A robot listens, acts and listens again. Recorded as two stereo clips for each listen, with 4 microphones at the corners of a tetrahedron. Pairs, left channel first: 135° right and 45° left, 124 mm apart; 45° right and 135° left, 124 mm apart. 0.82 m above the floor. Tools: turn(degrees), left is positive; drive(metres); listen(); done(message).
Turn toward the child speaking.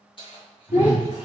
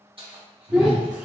turn(degrees=-140)
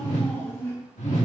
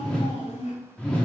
turn(degrees=-65)
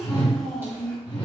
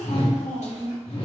turn(degrees=-50)
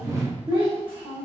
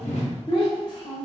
done("Facing the child speaking.")